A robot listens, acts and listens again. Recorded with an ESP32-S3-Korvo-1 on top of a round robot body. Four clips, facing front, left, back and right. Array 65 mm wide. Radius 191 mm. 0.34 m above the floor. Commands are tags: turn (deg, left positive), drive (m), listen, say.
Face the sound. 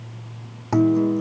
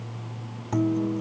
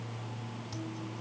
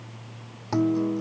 <turn deg="-10"/>
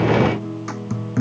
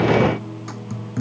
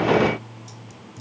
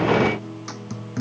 <say>Found it: a guitar, straight ahead.</say>